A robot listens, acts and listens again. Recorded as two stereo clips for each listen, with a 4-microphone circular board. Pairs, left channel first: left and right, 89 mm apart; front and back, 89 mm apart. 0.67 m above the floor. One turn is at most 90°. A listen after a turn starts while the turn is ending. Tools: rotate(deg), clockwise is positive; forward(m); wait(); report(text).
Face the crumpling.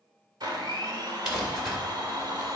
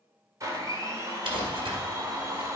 rotate(90)
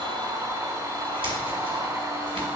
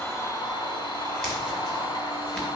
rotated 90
rotate(85)
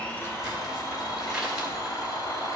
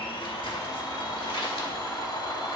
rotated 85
report("Found it: crumpling, straight ahead, 2 to 4 m away.")